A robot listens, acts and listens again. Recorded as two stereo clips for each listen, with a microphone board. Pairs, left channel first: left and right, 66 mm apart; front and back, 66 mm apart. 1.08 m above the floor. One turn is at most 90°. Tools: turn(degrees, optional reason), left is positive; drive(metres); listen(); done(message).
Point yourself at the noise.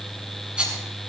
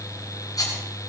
turn(degrees=-15, reason="The rattle: 15° right.")
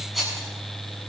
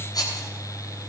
done("Found it: a rattle, straight ahead.")